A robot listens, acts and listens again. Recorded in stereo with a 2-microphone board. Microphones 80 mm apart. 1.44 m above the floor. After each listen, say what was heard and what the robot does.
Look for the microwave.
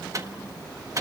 The microwave: about 40° right or 140° right. Turn 40° right.
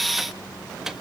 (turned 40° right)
Facing the microwave, 1 to 2 m away.